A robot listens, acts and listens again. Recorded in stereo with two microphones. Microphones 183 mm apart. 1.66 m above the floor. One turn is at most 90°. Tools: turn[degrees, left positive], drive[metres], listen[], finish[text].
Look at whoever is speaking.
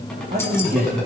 Thought: The man speaking: about 55° right or 125° right.
Action: turn[-55]
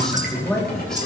Action: finish[Found it: a man speaking, straight ahead.]